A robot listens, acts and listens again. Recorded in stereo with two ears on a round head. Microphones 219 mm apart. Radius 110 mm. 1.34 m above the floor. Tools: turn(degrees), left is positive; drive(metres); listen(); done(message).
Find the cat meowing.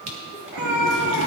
turn(degrees=-60)
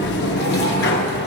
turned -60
listen()
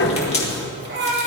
turn(degrees=-45)
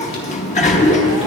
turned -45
listen()
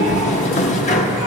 listen()
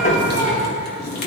done("I heard a cat meowing from this way, but can't make it out now.")